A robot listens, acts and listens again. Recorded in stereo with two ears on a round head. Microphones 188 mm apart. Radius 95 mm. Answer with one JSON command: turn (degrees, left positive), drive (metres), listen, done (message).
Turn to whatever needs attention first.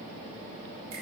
{"listen": true}
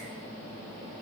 {"listen": true}
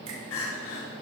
{"turn": 70}
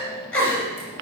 {"turn": 10}
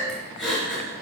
{"done": "Facing the crying, over 4 m away."}